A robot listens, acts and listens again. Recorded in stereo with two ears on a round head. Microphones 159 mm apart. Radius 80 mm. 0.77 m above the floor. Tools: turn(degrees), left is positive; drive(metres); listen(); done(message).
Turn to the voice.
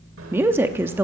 turn(degrees=-30)
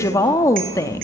turn(degrees=20)
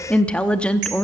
done("Found it: a woman speaking, straight ahead.")